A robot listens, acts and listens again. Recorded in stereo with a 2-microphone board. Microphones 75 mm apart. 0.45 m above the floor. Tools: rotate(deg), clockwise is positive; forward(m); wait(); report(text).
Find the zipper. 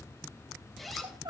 rotate(-30)
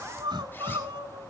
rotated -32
wait()
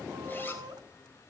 wait()
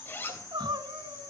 rotate(-150)
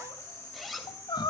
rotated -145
report("Facing the zipper.")